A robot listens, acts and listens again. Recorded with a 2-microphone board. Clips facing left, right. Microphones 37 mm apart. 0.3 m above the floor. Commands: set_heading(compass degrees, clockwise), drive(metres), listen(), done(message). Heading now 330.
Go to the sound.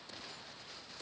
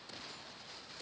listen()
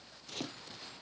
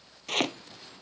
set_heading(40)
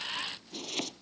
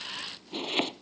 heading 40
set_heading(80)
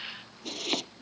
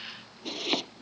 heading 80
set_heading(90)
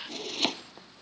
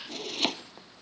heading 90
drive(1.0)
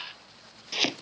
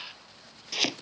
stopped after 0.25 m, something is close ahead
done("Something is in my way. I am facing the chopping but have not reached it.")